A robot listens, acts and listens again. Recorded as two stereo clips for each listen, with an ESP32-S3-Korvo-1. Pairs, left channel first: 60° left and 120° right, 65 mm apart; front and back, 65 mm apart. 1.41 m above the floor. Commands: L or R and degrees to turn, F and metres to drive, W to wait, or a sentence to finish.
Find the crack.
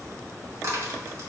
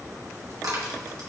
R160
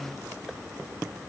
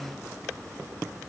I heard a crack from this way, but can't make it out now.